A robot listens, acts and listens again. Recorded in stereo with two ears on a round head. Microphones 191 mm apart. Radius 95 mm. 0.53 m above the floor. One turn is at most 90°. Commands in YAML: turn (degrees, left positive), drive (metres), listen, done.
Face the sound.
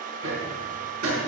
turn: -70
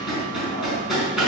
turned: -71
done: "Found it: hammering, straight ahead, over 4 m away."